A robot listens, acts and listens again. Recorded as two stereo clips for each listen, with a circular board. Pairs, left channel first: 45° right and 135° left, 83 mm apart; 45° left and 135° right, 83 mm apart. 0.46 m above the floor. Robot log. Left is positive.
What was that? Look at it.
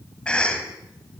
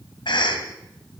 note: The cough: 30° left.
cmd yaw +30
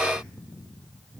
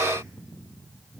cmd idle
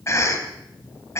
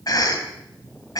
end: Found it: a cough, straight ahead, 2 to 4 m away.